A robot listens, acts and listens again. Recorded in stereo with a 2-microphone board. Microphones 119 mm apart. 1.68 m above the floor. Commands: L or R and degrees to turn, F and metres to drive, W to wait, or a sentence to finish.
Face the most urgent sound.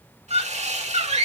R65
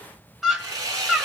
Found it: a scream, straight ahead.